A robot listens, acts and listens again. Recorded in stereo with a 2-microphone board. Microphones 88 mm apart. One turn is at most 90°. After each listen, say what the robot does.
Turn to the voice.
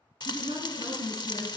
Turn 70° right.
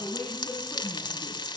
Turn 15° right.
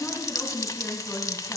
Found it: a woman speaking, straight ahead.